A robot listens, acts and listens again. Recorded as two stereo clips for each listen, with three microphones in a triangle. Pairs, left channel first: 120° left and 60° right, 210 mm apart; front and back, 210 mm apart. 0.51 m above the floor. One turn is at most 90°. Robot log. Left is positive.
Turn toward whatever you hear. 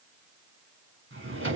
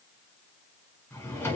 note: The drawer: 80° right.
cmd yaw -80
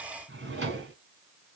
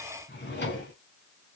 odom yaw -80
note: The drawer is now 35° right.
cmd yaw -35
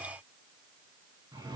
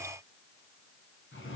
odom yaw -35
note: The drawer is now 10° left.
cmd yaw +10
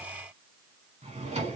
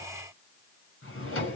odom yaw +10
end: Found it: a drawer, straight ahead, 1 to 2 m away.